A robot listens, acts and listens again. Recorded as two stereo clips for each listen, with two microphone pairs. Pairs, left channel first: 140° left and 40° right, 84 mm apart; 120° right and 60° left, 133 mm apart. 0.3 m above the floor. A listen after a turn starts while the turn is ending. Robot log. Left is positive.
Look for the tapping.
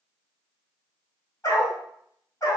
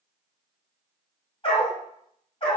cmd idle
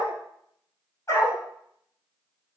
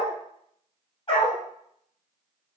cmd idle
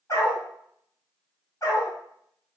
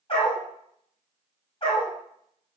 end: I can't make out tapping, only a dog barking.